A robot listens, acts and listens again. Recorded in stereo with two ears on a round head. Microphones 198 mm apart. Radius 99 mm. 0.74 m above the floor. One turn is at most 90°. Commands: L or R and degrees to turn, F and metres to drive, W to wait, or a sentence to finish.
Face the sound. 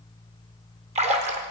R30
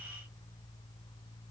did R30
W
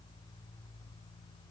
I heard a splash, but can't make it out now. It was about straight ahead or 120° right.